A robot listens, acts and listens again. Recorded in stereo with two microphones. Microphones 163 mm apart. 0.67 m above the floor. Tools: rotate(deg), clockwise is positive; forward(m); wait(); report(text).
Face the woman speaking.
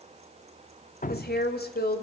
rotate(-75)
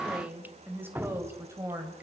rotate(20)
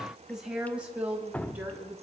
rotate(10)
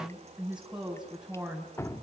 report("Found it: a woman speaking, straight ahead, over 4 m away.")